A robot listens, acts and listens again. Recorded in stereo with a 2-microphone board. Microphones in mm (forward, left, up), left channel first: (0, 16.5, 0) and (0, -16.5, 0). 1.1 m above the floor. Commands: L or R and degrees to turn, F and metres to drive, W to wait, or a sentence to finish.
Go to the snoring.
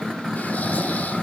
L55
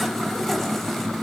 W
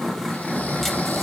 L70
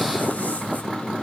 W
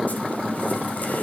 W
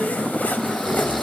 L10
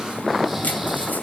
W
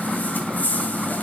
W
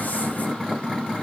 I heard snoring from this way, but can't make it out now. I did not reach it.